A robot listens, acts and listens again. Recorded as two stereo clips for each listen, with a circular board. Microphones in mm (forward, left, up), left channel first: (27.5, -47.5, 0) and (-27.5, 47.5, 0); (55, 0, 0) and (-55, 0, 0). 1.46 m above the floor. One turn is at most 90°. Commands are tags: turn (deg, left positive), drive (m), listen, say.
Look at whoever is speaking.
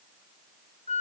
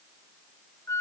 <listen/>
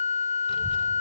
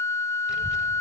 <turn deg="-90"/>
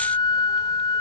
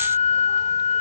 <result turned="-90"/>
<listen/>
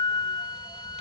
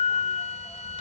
<turn deg="-45"/>
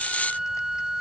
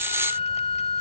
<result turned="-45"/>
<listen/>
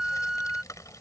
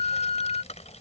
<say>Found it: a child speaking, straight ahead.</say>